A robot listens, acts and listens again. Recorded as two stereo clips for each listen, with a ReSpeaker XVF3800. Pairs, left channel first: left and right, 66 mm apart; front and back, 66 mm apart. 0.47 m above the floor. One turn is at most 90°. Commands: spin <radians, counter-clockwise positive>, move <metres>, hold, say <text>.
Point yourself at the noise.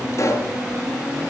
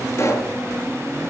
spin 0.87
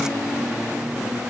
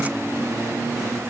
say I heard a pop from this way, but can't make it out now.